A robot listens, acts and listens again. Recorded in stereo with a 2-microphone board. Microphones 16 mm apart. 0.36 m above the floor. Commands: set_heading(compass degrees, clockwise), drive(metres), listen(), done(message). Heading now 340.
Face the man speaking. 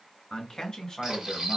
set_heading(295)
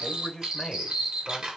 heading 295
set_heading(260)
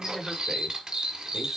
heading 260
done("Facing the man speaking.")